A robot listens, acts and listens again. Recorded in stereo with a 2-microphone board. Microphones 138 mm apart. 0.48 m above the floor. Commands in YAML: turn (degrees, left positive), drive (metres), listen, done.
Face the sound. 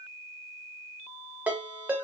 turn: -30
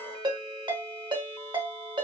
turn: -140
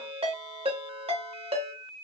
turn: -50
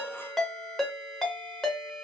done: "Facing the ringtone, under 1 m away."